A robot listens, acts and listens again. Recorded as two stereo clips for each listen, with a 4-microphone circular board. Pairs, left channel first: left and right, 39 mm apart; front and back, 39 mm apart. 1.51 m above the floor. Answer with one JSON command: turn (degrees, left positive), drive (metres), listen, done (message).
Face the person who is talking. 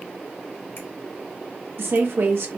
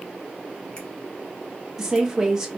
{"turn": -100}
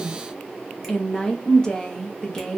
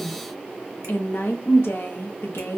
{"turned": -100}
{"turn": 20}
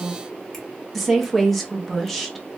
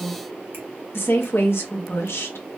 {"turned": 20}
{"done": "Facing the woman speaking."}